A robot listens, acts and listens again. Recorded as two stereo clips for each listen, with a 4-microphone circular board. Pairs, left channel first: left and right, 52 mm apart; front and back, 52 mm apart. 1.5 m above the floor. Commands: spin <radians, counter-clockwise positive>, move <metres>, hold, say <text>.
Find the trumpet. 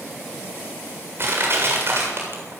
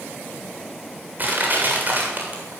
hold
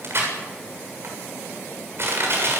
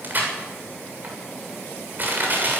hold
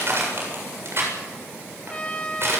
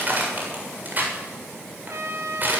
spin 2.79
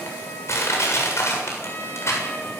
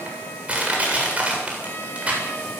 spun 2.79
hold
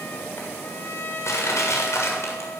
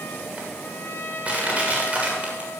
spin 0.79
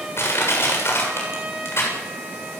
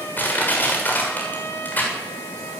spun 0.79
spin -0.35
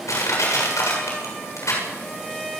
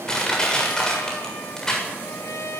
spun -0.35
say Found it: a trumpet, straight ahead.